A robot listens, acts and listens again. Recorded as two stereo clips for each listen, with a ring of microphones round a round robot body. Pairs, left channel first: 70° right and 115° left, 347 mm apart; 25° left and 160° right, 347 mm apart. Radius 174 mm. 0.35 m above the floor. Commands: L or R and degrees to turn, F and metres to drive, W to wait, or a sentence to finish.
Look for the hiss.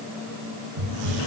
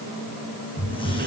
L100
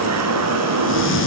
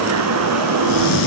R10
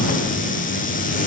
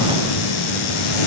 Found it: a hiss, straight ahead.